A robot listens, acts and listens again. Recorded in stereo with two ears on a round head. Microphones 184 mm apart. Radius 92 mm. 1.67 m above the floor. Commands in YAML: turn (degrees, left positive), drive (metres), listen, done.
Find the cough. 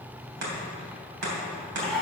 turn: 30
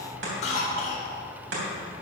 turn: 145
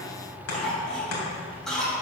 done: "Facing the cough."